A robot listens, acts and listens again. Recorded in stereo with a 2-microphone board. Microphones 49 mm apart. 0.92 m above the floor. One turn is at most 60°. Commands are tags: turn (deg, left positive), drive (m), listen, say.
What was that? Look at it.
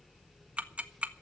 <turn deg="-30"/>
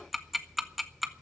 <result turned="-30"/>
<say>Found it: ticking, straight ahead.</say>